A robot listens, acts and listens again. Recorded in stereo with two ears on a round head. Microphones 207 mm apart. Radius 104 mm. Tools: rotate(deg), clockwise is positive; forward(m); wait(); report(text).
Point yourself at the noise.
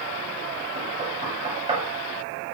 rotate(25)
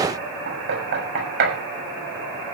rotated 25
rotate(130)
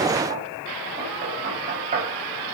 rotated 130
rotate(30)
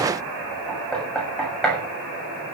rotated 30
report("Found it: knocking, straight ahead, over 4 m away.")